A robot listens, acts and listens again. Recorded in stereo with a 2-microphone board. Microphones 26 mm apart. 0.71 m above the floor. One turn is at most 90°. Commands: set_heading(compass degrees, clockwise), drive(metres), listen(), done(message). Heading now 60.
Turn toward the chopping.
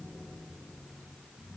listen()
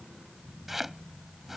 set_heading(90)
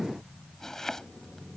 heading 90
set_heading(70)
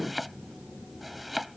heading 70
done("Facing the chopping.")